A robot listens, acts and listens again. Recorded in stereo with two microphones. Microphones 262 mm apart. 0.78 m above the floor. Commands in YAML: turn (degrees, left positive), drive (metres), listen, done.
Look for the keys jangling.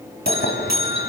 turn: 40
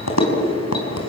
turn: 105
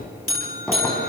done: "Found it: keys jangling, straight ahead."